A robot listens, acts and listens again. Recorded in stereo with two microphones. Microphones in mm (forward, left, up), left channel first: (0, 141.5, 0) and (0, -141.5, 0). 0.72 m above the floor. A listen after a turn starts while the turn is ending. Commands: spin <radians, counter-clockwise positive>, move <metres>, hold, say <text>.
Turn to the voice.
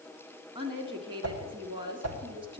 spin -0.26
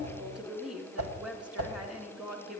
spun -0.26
say Facing the woman speaking.